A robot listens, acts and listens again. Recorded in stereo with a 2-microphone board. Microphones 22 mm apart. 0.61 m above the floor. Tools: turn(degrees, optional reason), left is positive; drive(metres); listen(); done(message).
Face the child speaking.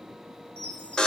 listen()
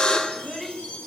turn(degrees=30)
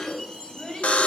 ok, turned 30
turn(degrees=135, reason="So it is at 135° left.")
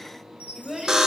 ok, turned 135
turn(degrees=-15, reason="The child speaking is now 15° right.")
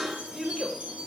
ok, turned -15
turn(degrees=-10, reason="The child speaking is now 10° right.")
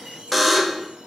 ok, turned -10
listen()
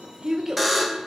turn(degrees=-20, reason="The child speaking is now 20° right.")
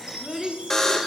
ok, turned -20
done("Found it: a child speaking, straight ahead.")